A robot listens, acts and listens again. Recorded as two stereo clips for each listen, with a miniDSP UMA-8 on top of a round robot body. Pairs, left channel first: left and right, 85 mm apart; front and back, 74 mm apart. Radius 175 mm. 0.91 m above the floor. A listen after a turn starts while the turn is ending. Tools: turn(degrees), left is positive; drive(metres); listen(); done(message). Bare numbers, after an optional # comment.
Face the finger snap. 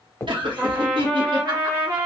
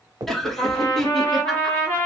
# The finger snap: 155° left.
turn(155)
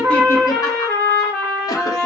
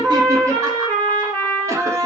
listen()
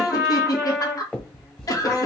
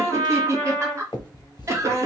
# The finger snap is now 15° left.
turn(15)
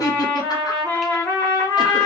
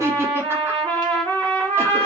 listen()
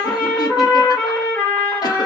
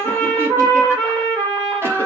listen()
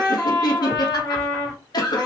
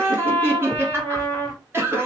done("I heard a finger snap from this way, but can't make it out now.")